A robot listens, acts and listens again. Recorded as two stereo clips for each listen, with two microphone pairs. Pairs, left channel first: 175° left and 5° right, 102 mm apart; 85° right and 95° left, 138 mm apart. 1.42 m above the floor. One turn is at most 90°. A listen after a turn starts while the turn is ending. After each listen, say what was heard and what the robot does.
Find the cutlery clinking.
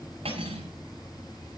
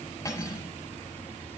The cutlery clinking: 15° right. Turn 15° right.
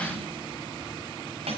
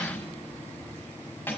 Found it: cutlery clinking, straight ahead, over 4 m away.